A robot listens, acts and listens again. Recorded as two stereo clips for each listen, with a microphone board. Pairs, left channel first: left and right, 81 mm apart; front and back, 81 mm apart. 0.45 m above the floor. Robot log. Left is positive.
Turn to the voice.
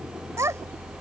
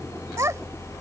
note: The child speaking: 135° right.
cmd yaw -135
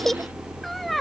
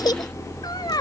end: Found it: a child speaking, straight ahead.